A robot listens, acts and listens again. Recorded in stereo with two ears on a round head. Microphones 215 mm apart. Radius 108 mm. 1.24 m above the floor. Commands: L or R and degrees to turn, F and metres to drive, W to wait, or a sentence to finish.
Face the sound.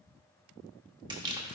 R20
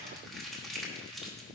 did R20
Facing the crumpling, 1 to 2 m away.